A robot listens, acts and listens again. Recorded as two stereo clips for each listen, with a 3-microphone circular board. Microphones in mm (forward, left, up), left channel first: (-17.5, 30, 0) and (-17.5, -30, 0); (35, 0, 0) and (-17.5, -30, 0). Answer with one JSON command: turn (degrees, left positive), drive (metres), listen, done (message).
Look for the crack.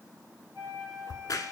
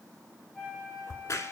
{"turn": 65}
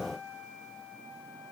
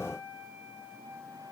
{"done": "Facing where the crack came from. I can't hear it now."}